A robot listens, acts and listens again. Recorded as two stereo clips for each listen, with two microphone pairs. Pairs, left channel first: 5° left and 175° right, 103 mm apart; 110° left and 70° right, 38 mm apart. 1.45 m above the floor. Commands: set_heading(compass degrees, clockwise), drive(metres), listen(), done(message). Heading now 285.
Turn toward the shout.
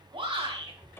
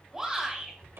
set_heading(70)
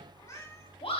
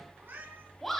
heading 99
set_heading(74)
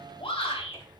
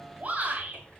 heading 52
set_heading(72)
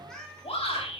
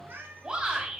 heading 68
done("Facing the shout.")